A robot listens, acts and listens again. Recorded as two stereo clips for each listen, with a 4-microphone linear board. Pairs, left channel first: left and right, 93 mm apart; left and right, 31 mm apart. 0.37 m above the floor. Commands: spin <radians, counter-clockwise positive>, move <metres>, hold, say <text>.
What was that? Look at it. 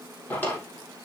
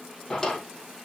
spin 0.35
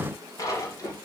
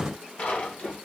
spin 2.53
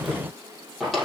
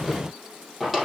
say Facing the drawer.